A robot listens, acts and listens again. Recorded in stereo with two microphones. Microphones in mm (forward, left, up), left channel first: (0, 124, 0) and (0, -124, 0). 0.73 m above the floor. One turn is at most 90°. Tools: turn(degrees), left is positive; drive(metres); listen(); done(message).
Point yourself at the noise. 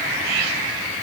listen()
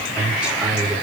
turn(degrees=-30)
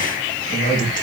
turn(degrees=35)
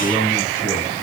turn(degrees=10)
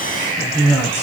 turn(degrees=10)
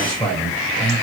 turn(degrees=10)
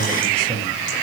done("Facing the man speaking, 2 to 4 m away.")